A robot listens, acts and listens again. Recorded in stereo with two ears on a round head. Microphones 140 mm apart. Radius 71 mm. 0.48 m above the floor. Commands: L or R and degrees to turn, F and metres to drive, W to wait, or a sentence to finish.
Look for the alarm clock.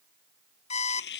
L45
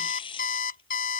L80
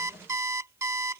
R20
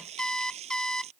Facing the alarm clock.